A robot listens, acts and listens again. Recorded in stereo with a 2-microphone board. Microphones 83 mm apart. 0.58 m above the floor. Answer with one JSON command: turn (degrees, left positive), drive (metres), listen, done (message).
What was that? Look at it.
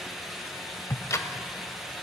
{"turn": 40}
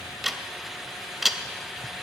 {"done": "Found it: ticking, straight ahead."}